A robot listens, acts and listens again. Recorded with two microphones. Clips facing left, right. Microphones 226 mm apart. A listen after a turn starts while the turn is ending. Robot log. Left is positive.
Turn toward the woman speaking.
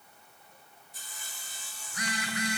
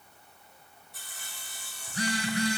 cmd idle
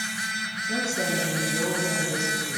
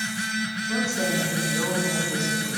note: The woman speaking: about 15° left or 165° left.
cmd yaw +15
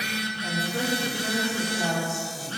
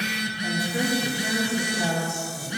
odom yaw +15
cmd yaw -30
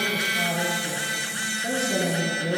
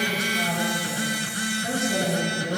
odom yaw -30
note: So it is at 20° left.
cmd yaw +20
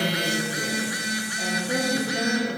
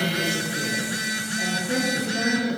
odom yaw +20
end: Found it: a woman speaking, straight ahead.